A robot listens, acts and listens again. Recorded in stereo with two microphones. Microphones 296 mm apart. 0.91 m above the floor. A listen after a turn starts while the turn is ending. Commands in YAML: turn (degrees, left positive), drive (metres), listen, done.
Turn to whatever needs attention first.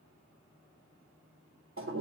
listen: true
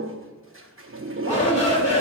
turn: 20
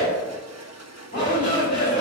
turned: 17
turn: 140
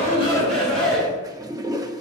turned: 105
turn: 35
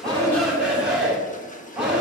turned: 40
done: "Facing the shout."